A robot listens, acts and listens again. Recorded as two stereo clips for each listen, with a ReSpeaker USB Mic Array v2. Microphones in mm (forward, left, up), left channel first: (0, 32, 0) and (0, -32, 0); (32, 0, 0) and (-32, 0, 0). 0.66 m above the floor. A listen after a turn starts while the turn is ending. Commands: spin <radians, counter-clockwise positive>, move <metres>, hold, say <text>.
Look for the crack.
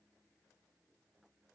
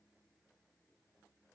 hold
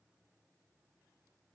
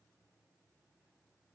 hold
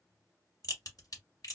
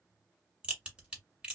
spin 1.83
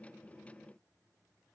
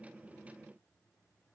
say I heard a crack from this way, but can't make it out now.